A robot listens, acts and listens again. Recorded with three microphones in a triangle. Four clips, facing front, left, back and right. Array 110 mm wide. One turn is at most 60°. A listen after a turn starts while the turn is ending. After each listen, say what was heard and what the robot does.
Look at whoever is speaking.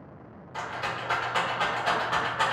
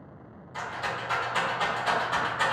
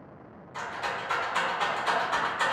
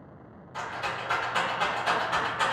Keep listening.
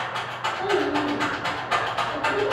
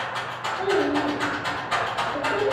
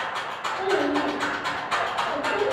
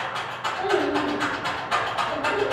The child speaking: 115° right. Turn 60° right.
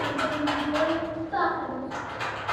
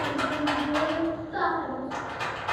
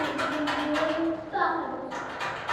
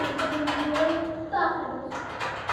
The child speaking is now 60° right. Turn 60° right.
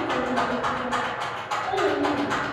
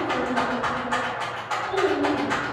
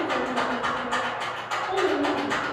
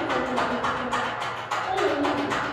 The child speaking is now 20° right. Turn 20° right.
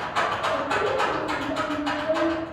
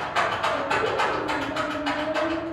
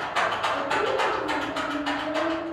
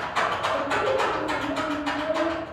Facing the child speaking, 1 to 2 m away.